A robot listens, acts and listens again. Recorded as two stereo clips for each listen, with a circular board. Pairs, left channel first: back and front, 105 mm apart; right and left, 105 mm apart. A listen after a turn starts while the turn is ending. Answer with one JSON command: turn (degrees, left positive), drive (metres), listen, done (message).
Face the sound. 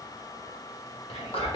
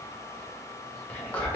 {"turn": -170}
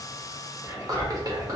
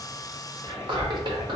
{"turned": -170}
{"turn": 50}
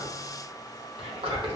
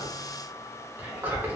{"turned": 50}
{"turn": 20}
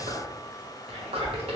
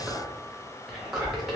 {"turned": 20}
{"done": "Facing the whispering."}